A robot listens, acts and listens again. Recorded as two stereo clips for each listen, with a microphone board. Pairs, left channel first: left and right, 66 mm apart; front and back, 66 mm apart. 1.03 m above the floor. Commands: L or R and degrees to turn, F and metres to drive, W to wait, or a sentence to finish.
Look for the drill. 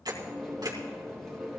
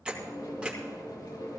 W
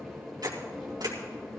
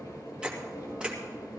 W
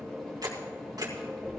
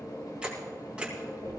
I can't make out a drill to turn to.